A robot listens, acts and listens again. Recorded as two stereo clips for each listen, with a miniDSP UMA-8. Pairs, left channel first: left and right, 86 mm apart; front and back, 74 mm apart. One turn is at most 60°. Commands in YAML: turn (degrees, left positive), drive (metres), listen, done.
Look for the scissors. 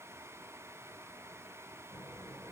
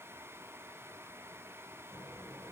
listen: true
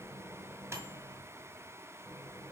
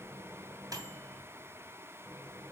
listen: true
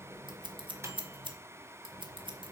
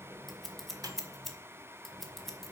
turn: -60
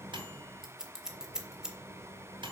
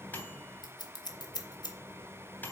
done: "Found it: scissors, straight ahead, 2 to 4 m away."